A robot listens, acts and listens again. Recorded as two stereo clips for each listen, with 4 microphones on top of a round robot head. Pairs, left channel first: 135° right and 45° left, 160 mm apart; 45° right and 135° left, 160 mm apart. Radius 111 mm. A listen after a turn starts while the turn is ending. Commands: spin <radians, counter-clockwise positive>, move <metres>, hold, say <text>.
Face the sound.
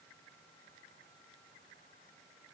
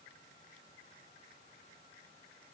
hold
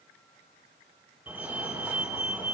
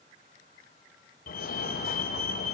spin -0.61
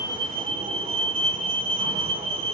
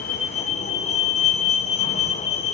say Facing the fire alarm.